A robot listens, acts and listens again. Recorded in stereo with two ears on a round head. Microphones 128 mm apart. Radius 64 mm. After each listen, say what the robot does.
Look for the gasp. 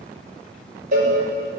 Keep listening.
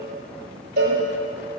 Keep listening.
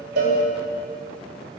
I can't make out a gasp, only a cowbell.